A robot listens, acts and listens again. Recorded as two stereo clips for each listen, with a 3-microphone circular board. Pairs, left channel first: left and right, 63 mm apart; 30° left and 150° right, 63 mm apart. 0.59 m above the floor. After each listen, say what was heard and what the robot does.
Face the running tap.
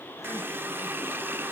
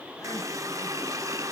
The running tap: 140° right. Turn 140° right.
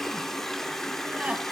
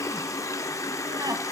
Facing the running tap.